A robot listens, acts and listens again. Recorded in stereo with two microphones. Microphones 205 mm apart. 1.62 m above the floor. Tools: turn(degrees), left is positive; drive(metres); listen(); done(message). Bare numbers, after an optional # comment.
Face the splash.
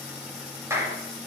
listen()
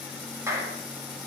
listen()
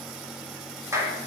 done("I can't make out a splash to turn to.")